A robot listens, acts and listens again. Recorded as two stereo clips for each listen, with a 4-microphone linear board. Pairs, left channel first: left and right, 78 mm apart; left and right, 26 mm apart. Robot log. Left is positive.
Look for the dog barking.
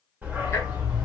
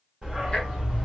note: The dog barking: about 15° right or 165° right.
cmd yaw -15
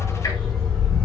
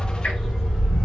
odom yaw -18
cmd yaw +30
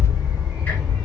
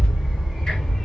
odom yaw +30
note: So it is at 10° right.
cmd yaw -10
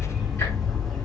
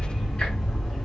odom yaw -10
end: Facing the dog barking, 1 to 2 m away.